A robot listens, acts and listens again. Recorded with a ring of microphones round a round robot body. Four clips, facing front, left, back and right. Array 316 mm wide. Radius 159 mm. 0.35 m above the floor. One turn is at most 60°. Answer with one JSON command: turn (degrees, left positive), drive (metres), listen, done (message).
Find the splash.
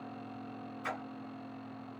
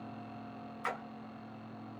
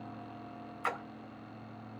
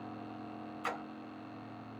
{"turn": 60}
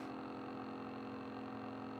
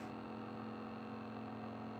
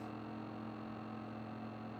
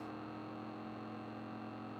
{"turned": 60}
{"turn": 60}
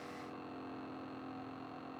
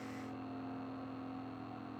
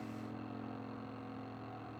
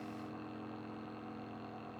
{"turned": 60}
{"turn": 45}
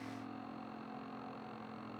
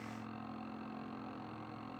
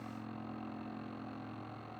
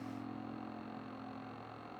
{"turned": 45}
{"done": "I heard a splash from this way, but can't make it out now."}